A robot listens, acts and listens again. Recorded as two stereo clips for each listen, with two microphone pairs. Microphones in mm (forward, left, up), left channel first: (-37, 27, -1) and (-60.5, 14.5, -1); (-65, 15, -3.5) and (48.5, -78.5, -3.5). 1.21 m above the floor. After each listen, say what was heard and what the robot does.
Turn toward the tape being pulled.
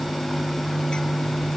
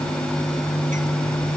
Keep listening.
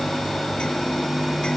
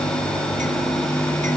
Keep listening.
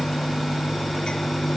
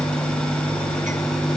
I can't make out tape being pulled.